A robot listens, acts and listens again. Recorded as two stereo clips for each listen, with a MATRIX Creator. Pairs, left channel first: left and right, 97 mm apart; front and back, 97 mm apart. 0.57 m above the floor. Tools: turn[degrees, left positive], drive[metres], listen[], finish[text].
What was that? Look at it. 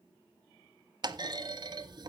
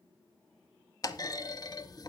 Thought: The clunk: 45° right.
Action: turn[-45]
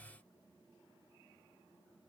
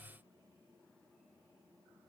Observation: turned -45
Action: finish[I heard a clunk from this way, but can't make it out now.]